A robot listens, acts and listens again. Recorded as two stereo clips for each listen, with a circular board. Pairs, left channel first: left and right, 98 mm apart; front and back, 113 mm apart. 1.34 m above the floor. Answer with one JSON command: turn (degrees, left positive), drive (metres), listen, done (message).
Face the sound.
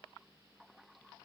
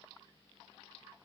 {"listen": true}
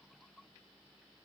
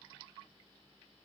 {"listen": true}
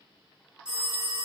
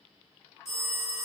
{"turn": -10}
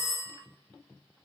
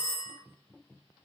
{"done": "Found it: a phone ringing, straight ahead, 1 to 2 m away."}